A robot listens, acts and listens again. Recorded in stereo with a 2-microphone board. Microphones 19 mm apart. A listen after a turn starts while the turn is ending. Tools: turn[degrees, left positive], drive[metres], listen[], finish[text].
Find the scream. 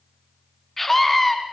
Action: turn[30]
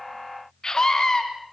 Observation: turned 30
Thought: So it is at 140° left.
Action: turn[140]
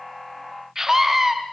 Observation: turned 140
Thought: The scream is now 25° right.
Action: turn[-25]
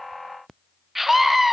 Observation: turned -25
Thought: The scream is now 10° right.
Action: turn[-10]
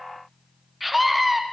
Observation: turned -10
Action: finish[Found it: a scream, straight ahead, 2 to 4 m away.]